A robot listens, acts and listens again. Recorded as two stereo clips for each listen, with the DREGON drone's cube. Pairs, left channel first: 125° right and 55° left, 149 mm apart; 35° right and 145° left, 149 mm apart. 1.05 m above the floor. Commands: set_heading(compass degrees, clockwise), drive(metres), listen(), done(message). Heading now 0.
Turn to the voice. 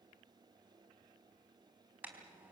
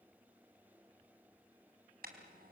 listen()
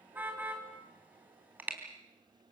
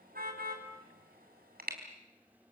listen()
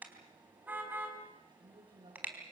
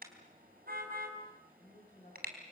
done("Found it: a woman speaking, straight ahead, over 4 m away.")